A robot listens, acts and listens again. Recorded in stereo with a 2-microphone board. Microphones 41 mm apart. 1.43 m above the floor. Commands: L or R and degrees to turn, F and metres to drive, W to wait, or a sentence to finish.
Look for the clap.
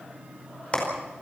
L30
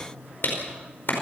L120
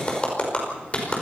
L30
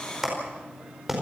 R10
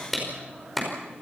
Found it: a clap, straight ahead, over 4 m away.